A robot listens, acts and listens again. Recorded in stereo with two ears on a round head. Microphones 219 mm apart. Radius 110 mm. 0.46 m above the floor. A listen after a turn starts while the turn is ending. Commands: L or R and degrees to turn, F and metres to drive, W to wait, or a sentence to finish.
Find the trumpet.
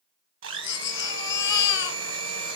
W
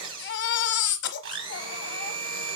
W
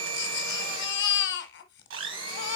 I can't make out a trumpet to turn to.